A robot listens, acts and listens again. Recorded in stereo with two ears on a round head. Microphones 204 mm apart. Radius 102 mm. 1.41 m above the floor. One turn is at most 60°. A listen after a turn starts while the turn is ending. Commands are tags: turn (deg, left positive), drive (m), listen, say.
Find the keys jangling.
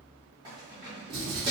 <turn deg="-20"/>
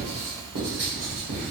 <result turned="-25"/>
<listen/>
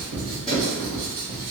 <listen/>
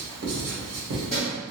<say>Facing the keys jangling, 1 to 2 m away.</say>